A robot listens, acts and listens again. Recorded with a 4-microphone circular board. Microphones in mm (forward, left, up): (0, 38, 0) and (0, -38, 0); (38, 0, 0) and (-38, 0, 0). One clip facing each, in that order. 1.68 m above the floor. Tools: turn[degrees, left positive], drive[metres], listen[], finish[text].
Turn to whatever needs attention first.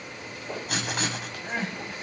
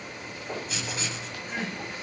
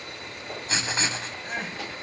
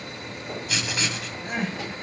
Thought: The crying: 145° left.
Action: turn[145]
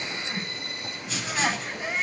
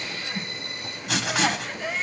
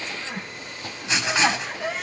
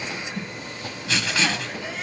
Thought: The crying is now 15° left.
Action: turn[15]
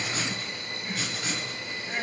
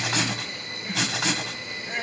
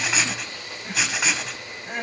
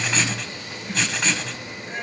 Action: finish[Found it: crying, straight ahead.]